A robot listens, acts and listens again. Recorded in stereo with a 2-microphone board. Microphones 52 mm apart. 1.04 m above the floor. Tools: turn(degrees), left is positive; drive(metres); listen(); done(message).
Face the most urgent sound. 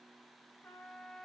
listen()
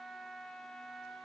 listen()
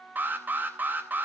turn(degrees=-40)
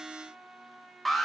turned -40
done("Found it: an alarm, straight ahead, 2 to 4 m away.")